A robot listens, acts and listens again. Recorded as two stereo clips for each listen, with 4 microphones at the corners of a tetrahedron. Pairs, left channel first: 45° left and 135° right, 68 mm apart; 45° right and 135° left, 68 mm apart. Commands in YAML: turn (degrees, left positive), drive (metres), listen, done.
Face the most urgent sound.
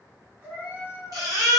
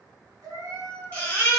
turn: -110
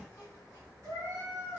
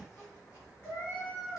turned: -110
listen: true
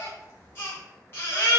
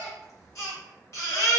turn: -10
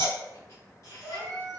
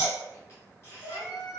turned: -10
done: "Facing the baby crying."